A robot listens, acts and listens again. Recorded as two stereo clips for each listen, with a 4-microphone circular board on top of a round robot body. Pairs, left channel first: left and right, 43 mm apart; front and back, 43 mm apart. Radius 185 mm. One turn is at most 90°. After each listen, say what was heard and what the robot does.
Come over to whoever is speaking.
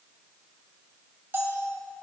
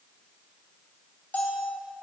Keep listening.
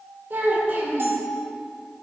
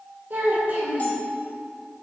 The child speaking: 130° right. Turn 90° right.
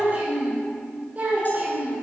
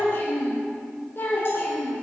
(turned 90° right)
The child speaking is now 40° right. Turn 40° right.
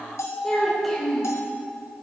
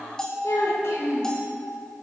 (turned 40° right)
Drive 1.0 m forward.
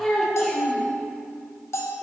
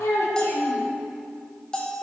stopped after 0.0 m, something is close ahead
Blocked. The child speaking is further on, straight ahead.